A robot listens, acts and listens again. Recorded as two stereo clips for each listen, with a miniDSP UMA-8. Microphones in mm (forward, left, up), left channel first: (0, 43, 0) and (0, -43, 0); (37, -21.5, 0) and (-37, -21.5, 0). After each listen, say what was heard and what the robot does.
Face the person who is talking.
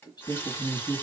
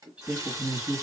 The man speaking: 110° left. Turn 110° left.
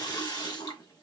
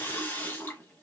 Keep listening.
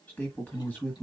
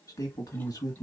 The man speaking is now 20° left. Turn 20° left.
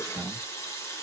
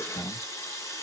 Facing the man speaking, 1 to 2 m away.